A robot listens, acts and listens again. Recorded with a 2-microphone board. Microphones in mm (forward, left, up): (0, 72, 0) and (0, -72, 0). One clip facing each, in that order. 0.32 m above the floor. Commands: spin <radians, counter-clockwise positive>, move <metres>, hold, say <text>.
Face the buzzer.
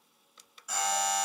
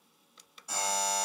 spin -0.52
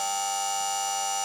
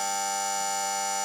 spin -2.01
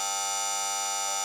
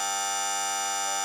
spin 0.44
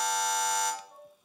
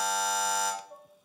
say Facing the buzzer.